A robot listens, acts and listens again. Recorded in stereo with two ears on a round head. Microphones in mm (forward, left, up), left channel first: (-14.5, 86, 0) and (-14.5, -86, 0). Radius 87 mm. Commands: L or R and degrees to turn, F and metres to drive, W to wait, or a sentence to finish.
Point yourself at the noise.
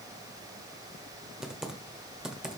R30
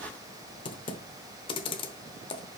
L25
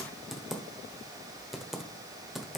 Facing the typing on a keyboard.